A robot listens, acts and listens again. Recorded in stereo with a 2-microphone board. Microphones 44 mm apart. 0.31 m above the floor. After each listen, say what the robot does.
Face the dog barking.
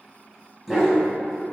Turn 30° right.
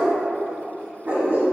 Turn 145° right.
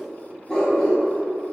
Turn 20° left.
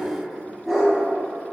Facing the dog barking, under 1 m away.